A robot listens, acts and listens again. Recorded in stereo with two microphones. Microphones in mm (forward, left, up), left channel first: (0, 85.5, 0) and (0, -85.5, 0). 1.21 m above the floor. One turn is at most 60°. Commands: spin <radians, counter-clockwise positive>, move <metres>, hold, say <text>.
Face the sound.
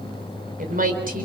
spin -0.96
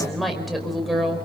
say Found it: a woman speaking, straight ahead, over 4 m away.